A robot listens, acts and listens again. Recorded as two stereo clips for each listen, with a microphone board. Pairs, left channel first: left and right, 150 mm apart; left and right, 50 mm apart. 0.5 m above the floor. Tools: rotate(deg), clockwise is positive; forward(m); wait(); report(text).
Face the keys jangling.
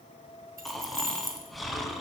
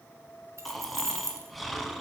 rotate(70)
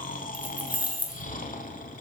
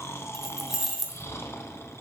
rotate(10)
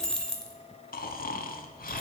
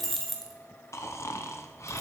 report("Found it: keys jangling, straight ahead, 1 to 2 m away.")